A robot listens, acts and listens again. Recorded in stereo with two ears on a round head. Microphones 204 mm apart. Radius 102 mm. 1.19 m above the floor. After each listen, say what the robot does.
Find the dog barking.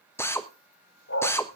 Turn 55° left.
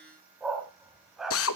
Found it: a dog barking, straight ahead.